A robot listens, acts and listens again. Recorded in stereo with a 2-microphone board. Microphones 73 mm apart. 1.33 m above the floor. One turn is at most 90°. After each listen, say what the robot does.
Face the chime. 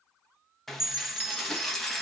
Turn 35° left.
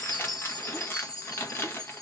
Turn 90° left.
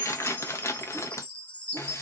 Turn 20° left.
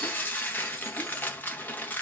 Keep listening.
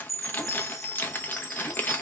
Facing the chime, 1 to 2 m away.